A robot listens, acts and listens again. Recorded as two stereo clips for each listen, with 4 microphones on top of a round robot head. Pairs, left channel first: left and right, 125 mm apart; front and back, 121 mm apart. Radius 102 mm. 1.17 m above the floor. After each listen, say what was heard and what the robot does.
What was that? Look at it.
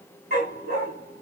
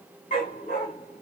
The dog barking: 60° right. Turn 60° right.
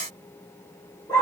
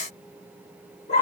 Facing the dog barking, 1 to 2 m away.